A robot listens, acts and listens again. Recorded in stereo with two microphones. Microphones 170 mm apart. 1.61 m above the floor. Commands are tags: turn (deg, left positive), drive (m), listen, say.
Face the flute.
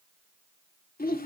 <listen/>
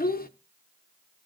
<listen/>
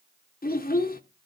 <say>I can't make out a flute to turn to.</say>